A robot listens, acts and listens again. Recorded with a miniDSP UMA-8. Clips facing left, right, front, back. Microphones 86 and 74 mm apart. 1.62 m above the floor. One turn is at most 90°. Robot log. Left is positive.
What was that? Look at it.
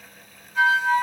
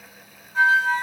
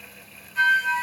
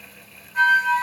note: The flute: 145° right.
cmd yaw -90
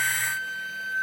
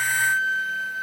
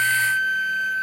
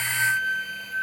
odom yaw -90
note: The flute is now 85° right.
cmd yaw -85
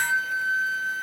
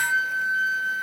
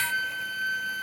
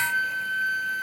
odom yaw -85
note: The flute is now 20° left.
cmd yaw +20
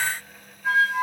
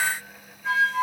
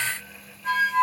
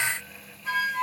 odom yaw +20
end: Found it: a flute, straight ahead.